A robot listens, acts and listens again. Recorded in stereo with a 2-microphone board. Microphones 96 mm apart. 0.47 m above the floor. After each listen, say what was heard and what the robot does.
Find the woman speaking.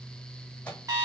Keep listening.
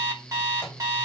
Keep listening.
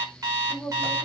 The woman speaking: about 20° right or 160° right. Turn 20° right.
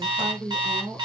The woman speaking: about 40° right or 140° right. Turn 40° right.
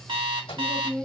So it is at 10° right. Turn 10° right.
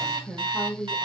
The woman speaking is now 10° left. Turn 10° left.
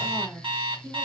Found it: a woman speaking, straight ahead, 1 to 2 m away.